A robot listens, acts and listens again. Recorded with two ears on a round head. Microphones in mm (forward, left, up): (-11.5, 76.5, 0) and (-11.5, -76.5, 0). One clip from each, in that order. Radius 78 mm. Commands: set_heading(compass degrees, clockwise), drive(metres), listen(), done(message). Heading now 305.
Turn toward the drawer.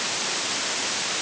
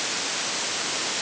listen()
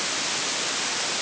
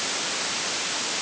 listen()
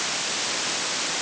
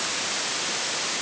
done("I can't make out a drawer to turn to.")